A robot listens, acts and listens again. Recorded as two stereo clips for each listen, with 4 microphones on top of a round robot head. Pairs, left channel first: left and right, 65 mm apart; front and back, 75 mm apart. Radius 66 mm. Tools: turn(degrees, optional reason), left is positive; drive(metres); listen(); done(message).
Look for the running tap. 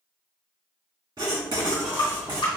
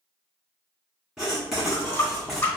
turn(degrees=55, reason="The running tap: 55° left.")
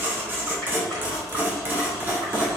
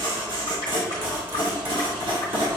listen()
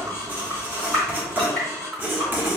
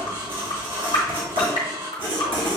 done("Facing the running tap, 1 to 2 m away.")